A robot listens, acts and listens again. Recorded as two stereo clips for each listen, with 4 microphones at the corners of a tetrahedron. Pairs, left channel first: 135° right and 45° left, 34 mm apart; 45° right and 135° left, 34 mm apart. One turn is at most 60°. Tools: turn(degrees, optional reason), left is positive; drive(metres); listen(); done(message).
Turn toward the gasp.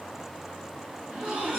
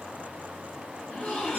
done("Found it: a gasp, straight ahead, 2 to 4 m away.")